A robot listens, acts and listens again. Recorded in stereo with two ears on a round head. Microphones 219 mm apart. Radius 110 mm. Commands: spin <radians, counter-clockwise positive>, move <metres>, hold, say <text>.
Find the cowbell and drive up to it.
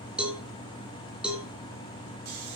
spin -0.52
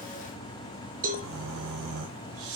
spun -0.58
spin -2.53
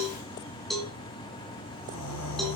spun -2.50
move 1.0
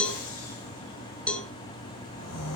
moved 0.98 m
move 1.0
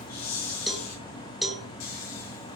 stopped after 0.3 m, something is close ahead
say I am next to the cowbell.